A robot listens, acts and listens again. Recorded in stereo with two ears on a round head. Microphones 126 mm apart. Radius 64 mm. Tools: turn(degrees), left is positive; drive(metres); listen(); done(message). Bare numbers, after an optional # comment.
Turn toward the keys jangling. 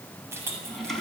# The keys jangling: about 20° right or 160° right.
turn(-20)
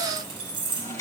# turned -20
# The keys jangling: about 40° right or 140° right.
turn(-40)
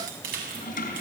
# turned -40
# So it is at 100° right.
turn(-100)
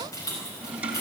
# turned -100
# The keys jangling is now 25° left.
turn(25)
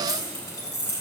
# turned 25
# The keys jangling is now 25° left.
turn(25)
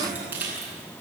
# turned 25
# The keys jangling is now 15° right.
turn(-15)
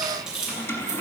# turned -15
done("Found it: keys jangling, straight ahead, over 4 m away.")